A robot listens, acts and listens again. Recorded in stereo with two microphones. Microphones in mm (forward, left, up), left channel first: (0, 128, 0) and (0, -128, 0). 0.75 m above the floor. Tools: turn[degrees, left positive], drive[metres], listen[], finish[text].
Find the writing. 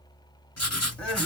Thought: The writing: about 75° left or 105° left.
Action: turn[75]
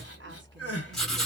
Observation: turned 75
Action: finish[Facing the writing, 1 to 2 m away.]